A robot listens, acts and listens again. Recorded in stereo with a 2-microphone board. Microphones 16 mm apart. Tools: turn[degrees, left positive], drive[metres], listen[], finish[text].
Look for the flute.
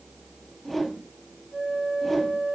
Action: turn[-30]
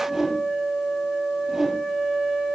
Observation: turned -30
Thought: So it is at 20° left.
Action: turn[20]
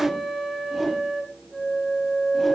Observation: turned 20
Action: finish[Facing the flute.]